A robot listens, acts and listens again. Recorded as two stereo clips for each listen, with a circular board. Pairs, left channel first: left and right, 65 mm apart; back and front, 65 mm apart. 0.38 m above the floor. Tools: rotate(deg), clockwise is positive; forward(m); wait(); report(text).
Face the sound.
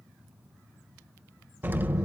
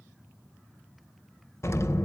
rotate(145)
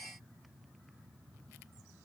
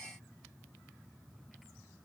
report("I heard an explosion from this way, but can't make it out now.")